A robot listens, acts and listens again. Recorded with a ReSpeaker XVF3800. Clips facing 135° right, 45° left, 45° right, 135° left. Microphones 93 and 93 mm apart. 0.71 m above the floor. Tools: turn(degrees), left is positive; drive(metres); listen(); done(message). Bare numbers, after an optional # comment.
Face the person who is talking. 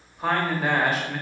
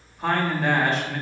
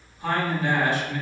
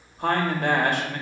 # The man speaking: 140° left.
turn(140)
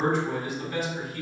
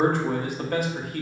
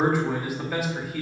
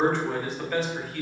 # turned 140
# The man speaking is now 35° left.
turn(35)
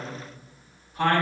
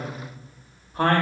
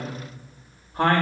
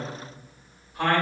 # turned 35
done("Facing the man speaking.")